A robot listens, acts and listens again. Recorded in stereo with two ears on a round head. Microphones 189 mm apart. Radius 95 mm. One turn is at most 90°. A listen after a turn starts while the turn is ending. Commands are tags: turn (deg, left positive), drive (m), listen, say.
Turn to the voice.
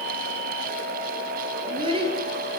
<turn deg="-25"/>
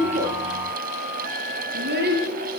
<turn deg="-90"/>
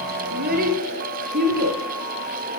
<turn deg="-45"/>
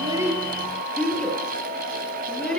<say>Found it: a child speaking, straight ahead, over 4 m away.</say>